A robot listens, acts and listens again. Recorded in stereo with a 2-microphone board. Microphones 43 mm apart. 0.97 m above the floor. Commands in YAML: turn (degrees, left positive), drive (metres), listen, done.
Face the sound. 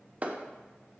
turn: -30
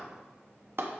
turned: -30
turn: -120
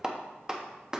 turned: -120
turn: -15
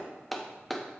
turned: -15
done: "Facing the clap, under 1 m away."